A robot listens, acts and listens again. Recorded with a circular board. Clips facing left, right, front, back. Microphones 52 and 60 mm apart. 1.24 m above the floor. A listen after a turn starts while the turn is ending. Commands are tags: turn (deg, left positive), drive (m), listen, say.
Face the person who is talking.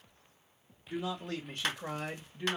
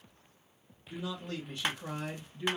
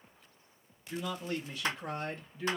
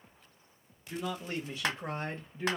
<turn deg="135"/>
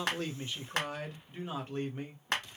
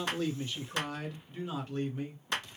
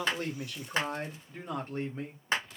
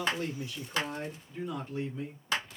<turn deg="35"/>
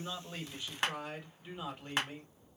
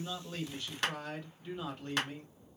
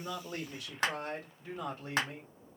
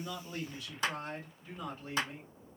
<turn deg="15"/>
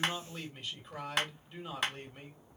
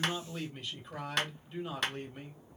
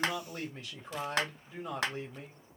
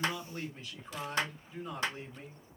<say>Found it: a man speaking, straight ahead.</say>